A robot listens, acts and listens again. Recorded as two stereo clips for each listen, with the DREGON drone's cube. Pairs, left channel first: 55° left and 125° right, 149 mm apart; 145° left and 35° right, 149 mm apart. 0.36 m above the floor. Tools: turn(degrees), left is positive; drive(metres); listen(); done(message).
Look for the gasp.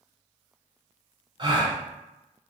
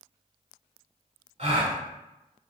turn(degrees=-70)
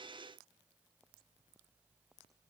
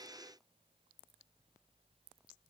done("I heard a gasp from this way, but can't make it out now.")